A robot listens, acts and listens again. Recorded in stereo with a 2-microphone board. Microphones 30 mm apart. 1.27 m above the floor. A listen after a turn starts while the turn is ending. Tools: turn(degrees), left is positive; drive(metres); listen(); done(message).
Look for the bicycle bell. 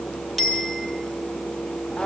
turn(degrees=30)
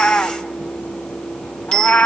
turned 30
turn(degrees=145)
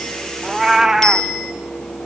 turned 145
turn(degrees=20)
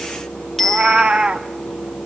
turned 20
done("Found it: a bicycle bell, straight ahead, over 4 m away.")